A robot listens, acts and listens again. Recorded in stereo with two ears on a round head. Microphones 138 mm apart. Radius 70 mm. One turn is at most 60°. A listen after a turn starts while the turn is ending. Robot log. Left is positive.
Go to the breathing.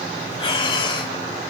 note: The breathing: about 40° left or 140° left.
cmd yaw +40
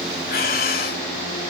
note: So it is at 100° left.
cmd yaw +60
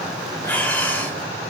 note: The breathing is now 10° left.
cmd yaw +10
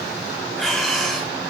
cmd fwd 1.0
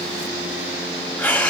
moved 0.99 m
note: The breathing is now 10° left.
cmd yaw +10
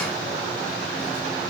cmd idle
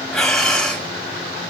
cmd fwd 1.0
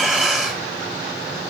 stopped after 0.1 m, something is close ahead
end: Arrived at the breathing, straight ahead.